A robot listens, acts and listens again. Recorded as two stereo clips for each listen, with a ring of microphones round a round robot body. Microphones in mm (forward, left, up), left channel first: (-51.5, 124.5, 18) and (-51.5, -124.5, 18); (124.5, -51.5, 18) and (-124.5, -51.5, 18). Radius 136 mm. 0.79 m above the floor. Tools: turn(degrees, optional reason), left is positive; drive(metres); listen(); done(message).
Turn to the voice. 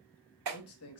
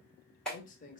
turn(degrees=60, reason="The man speaking: 60° left.")
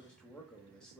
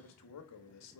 done("Facing the man speaking, under 1 m away.")